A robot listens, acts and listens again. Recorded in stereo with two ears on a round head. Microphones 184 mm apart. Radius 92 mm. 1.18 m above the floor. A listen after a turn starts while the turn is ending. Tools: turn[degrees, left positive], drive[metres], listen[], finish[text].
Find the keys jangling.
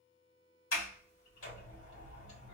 Action: listen[]
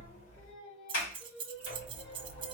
Thought: The keys jangling: about 25° right or 155° right.
Action: turn[-25]
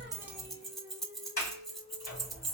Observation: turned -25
Action: finish[Facing the keys jangling.]